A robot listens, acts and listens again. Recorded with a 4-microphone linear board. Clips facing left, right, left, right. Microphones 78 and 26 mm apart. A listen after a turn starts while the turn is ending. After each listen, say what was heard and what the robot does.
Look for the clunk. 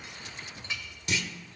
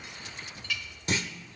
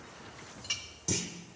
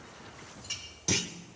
The clunk: about 40° right or 140° right. Turn 40° right.
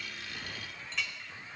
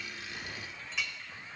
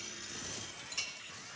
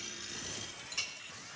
Keep listening.
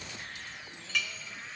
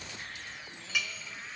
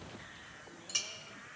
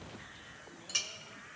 I heard a clunk, but can't make it out now. It was about straight ahead or 100° right.